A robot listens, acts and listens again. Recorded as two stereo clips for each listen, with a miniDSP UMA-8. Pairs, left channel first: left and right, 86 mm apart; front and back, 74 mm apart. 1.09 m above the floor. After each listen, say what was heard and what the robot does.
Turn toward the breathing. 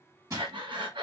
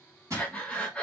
The breathing: 75° right. Turn 75° right.
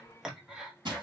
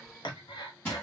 The breathing is now 10° right. Turn 10° right.
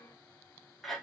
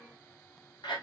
Facing the breathing, under 1 m away.